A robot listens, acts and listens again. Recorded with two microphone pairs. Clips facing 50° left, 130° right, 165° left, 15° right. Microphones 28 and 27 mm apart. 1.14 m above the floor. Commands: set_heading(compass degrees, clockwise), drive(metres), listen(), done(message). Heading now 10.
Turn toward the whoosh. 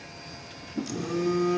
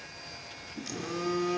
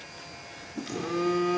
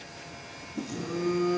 set_heading(285)
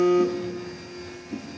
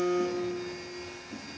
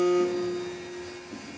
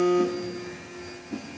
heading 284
done("Found it: a whoosh, straight ahead, 2 to 4 m away.")